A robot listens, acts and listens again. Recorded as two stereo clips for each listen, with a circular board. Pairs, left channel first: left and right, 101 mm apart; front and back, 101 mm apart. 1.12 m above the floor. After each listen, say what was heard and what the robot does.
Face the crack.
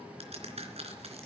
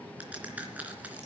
The crack: 105° right. Turn 105° right.
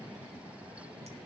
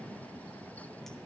Facing where the crack came from. I can't hear it now.